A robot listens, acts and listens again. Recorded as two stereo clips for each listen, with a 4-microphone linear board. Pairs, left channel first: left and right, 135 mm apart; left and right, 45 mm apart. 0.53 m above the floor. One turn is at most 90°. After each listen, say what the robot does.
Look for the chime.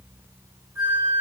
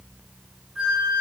Keep listening.
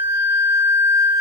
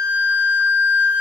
Keep listening.
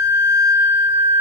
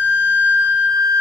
I can't make out a chime, only a flute.